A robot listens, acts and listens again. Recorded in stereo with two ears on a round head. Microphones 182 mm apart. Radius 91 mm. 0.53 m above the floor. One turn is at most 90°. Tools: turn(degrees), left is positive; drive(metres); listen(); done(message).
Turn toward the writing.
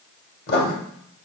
turn(degrees=50)
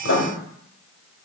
turn(degrees=70)
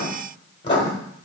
turn(degrees=30)
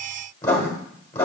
turn(degrees=15)
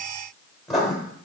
done("Found it: writing, straight ahead, 1 to 2 m away.")